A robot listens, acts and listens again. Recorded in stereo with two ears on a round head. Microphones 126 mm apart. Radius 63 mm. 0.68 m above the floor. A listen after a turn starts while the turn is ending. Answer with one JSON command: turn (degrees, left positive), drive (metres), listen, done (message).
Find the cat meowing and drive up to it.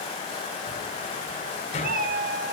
{"turn": -75}
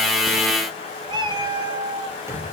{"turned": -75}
{"turn": -35}
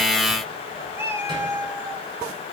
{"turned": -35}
{"turn": -20}
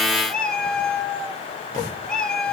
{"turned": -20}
{"drive": 1.0}
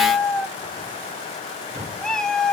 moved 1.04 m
{"drive": 1.0}
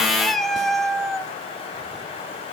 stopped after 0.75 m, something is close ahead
{"done": "Arrived at the cat meowing, straight ahead."}